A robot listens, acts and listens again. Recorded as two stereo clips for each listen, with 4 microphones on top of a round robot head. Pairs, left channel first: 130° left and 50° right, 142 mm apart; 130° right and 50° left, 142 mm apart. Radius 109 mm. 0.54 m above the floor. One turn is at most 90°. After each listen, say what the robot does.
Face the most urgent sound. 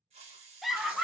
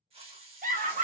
Turn 40° left.
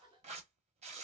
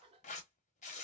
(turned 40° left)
Keep listening.
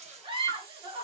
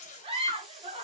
Found it: a scream, straight ahead.